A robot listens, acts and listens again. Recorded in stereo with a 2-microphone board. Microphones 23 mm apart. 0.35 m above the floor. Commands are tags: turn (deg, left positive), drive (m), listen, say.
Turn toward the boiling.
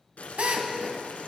<turn deg="90"/>
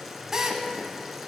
<turn deg="-10"/>
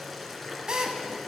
<say>Facing the boiling, 1 to 2 m away.</say>